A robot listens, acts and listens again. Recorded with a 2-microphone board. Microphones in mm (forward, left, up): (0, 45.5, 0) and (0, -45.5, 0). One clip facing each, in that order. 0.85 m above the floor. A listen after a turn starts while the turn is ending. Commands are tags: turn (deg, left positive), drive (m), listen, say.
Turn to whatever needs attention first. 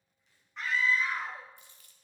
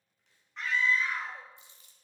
<turn deg="30"/>
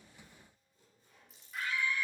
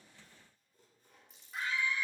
<turn deg="-25"/>
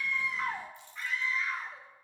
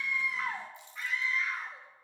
<say>Facing the scream, 1 to 2 m away.</say>